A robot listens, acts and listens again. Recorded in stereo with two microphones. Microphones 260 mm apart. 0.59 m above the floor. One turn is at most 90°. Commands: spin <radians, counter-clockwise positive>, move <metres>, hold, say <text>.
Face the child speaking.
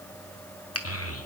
spin 1.05
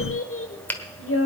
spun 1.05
spin 1.05
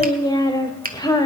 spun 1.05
spin 0.26
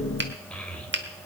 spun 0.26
say Found it: a child speaking, straight ahead, 1 to 2 m away.